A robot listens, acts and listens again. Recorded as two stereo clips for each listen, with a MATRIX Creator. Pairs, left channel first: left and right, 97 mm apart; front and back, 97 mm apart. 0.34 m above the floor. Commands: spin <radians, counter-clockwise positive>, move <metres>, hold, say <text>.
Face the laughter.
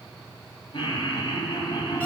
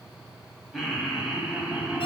spin 1.92
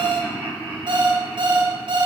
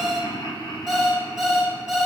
spin 0.44
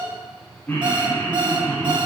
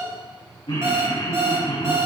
spin 0.44
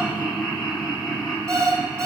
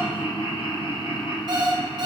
say Facing the laughter, 2 to 4 m away.